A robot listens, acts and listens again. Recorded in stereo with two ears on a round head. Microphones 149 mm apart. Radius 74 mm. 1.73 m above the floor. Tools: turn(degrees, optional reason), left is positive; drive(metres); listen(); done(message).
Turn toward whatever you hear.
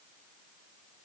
listen()
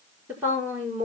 turn(degrees=-30)
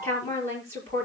turn(degrees=15, reason="So it is at 15° left.")
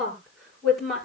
done("Facing the woman speaking, over 4 m away.")